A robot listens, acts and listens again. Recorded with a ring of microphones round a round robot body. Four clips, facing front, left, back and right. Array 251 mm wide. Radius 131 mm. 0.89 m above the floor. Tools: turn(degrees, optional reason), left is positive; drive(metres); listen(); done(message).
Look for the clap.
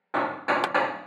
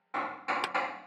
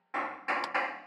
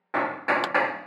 turn(degrees=-15, reason="The clap: 15° right.")
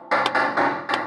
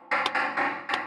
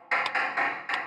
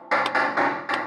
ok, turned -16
done("Found it: a clap, straight ahead.")